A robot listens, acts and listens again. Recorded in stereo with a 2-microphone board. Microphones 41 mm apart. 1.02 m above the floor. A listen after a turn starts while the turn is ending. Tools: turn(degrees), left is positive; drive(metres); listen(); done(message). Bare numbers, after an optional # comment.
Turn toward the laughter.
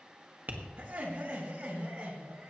# The laughter: about 25° right or 155° right.
turn(-25)
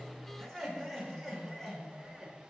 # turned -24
# So it is at 10° left.
turn(10)
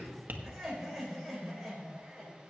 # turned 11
done("Facing the laughter.")